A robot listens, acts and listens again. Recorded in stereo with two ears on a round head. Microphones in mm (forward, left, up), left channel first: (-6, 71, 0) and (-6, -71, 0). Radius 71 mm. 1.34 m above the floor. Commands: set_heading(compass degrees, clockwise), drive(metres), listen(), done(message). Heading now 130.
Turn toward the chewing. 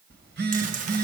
set_heading(180)
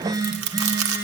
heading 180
set_heading(260)
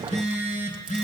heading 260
listen()
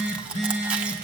done("Found it: chewing, straight ahead.")